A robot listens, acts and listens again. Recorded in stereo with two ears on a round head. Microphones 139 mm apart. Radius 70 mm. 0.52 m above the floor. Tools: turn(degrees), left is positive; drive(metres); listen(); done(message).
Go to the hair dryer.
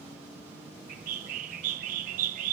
listen()
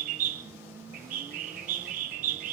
listen()
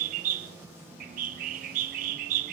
done("I can't make out a hair dryer, only a bird.")